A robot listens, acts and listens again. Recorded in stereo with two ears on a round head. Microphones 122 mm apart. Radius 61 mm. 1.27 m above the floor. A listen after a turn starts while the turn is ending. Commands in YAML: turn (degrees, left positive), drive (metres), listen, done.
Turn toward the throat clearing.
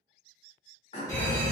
turn: 45
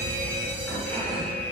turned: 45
listen: true
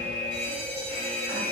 listen: true
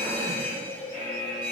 done: "I heard throat clearing, but can't make it out now. It was about straight ahead or 90° left."